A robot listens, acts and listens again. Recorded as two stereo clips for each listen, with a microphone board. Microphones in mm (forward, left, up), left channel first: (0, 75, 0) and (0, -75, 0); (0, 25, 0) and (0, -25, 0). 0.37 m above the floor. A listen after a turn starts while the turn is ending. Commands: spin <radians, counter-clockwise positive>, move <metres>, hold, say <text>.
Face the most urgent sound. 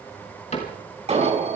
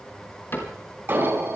spin -0.79
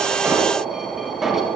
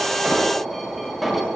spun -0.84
say Found it: an alarm, straight ahead, over 4 m away.